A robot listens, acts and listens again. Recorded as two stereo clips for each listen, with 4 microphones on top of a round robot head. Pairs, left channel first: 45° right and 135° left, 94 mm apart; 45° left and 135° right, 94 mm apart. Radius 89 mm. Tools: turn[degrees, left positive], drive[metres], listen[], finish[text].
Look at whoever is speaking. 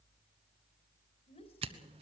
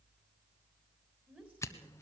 Thought: The woman speaking: 55° right.
Action: turn[-55]
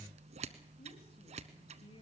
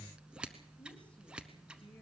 Thought: The woman speaking is now 35° right.
Action: turn[-35]
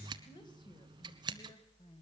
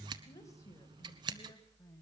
Thought: The woman speaking is now 15° right.
Action: turn[-15]
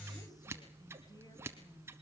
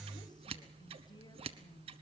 Action: listen[]
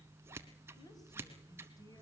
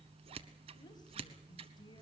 Action: finish[Found it: a woman speaking, straight ahead.]